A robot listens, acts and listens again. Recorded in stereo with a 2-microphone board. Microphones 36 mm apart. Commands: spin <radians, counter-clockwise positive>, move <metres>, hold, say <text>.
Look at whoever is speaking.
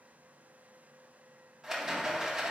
hold
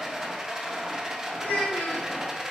spin 1.13
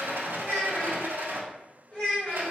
spin 0.44
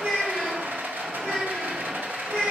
spin -0.17
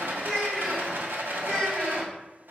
say Facing the child speaking, 2 to 4 m away.